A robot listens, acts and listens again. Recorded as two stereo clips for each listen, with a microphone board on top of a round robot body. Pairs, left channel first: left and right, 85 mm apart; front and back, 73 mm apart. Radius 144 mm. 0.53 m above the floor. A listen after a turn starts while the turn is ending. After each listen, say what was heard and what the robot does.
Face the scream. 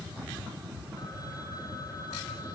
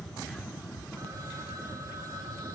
Keep listening.
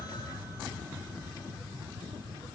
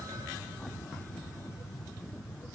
Keep listening.
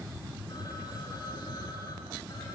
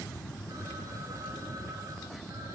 I can't make out a scream to turn to.